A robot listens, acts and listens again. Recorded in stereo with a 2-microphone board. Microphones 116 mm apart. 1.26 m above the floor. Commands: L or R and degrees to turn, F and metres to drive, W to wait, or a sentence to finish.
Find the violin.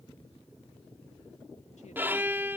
R15
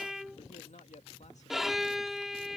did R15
Found it: a violin, straight ahead.